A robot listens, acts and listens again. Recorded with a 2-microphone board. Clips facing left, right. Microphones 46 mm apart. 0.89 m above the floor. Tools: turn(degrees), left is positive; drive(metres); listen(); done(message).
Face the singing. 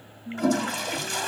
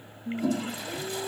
turn(degrees=-75)
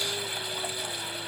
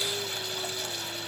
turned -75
listen()
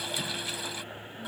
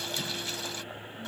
listen()
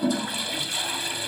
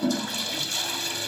done("I heard singing, but can't make it out now. It was about straight ahead or 30° right.")